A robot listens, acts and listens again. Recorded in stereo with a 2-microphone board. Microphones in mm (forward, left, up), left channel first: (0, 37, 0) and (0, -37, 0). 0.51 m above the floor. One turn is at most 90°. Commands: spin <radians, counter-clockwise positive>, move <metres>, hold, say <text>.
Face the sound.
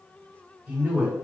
spin -0.35
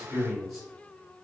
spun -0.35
say Facing the man speaking.